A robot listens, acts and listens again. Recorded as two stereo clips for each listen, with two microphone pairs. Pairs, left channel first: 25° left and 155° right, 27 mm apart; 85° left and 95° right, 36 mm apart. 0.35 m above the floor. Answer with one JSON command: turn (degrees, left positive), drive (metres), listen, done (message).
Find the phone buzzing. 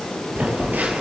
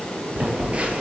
{"turn": -150}
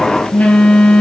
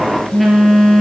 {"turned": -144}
{"done": "Facing the phone buzzing."}